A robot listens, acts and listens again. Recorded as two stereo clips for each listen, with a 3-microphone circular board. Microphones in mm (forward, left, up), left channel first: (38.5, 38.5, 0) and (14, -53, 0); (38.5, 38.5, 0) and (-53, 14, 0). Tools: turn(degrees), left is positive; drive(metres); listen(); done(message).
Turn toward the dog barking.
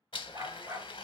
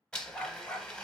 turn(degrees=-45)
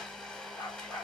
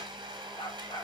turn(degrees=35)
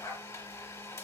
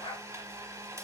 turn(degrees=20)
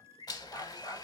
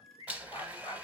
turn(degrees=25)
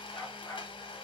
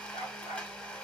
turn(degrees=10)
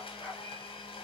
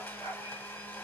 done("Facing the dog barking, 2 to 4 m away.")